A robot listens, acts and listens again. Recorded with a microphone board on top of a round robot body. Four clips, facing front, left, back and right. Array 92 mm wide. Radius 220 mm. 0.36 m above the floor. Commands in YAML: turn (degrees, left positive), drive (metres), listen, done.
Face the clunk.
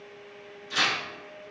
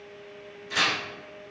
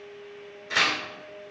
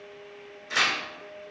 listen: true
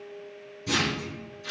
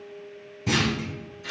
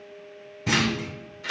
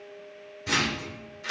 turn: 155
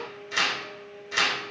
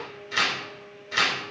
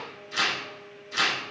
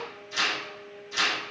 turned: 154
done: "I heard a clunk from this way, but can't make it out now."